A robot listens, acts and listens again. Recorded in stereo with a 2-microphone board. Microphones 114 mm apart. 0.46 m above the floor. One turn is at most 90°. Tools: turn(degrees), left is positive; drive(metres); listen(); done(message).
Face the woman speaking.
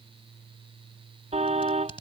listen()
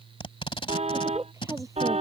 turn(degrees=-30)
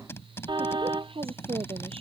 turn(degrees=-90)
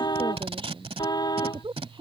turn(degrees=-45)
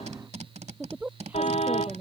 turn(degrees=-15)
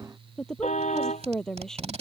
done("Facing the woman speaking.")